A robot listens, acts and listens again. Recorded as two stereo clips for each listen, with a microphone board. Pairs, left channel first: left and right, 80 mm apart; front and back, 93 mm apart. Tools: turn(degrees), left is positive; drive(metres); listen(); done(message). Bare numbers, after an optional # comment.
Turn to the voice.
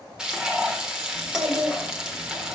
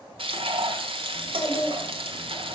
# The child speaking: 55° right.
turn(-55)
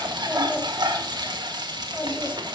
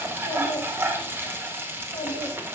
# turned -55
# The child speaking is now 10° left.
turn(10)
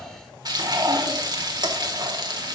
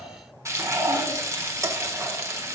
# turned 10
listen()
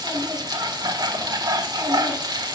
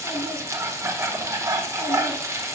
listen()
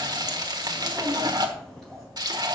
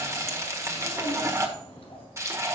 done("Facing the child speaking, 2 to 4 m away.")